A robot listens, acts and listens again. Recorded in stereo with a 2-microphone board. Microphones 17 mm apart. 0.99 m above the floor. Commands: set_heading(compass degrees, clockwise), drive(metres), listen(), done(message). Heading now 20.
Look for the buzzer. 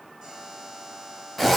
set_heading(60)
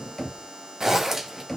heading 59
set_heading(159)
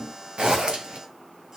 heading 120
set_heading(160)
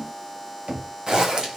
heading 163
done("Found it: a buzzer, straight ahead, over 4 m away.")